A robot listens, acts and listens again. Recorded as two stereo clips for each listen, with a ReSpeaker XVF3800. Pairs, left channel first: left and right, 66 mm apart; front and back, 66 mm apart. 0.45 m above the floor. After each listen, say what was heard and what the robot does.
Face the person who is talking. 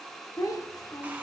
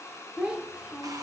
The child speaking: 105° left. Turn 105° left.
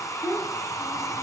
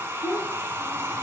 The child speaking is now 30° left. Turn 30° left.
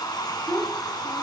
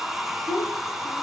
Found it: a child speaking, straight ahead, 1 to 2 m away.